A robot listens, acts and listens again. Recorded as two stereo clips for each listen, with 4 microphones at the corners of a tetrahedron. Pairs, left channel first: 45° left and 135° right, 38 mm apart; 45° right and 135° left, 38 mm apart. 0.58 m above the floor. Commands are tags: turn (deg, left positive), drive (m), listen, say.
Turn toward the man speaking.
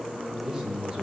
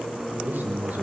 <turn deg="165"/>
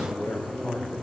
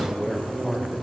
<turn deg="40"/>
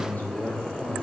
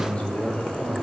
<turn deg="10"/>
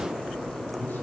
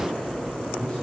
<listen/>
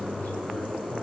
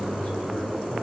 <turn deg="15"/>
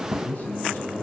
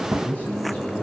<say>Facing the man speaking, over 4 m away.</say>